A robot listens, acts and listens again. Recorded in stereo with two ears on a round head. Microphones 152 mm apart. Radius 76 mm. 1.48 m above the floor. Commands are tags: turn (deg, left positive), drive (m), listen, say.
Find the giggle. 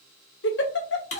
<turn deg="70"/>
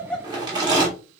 <say>Facing the giggle.</say>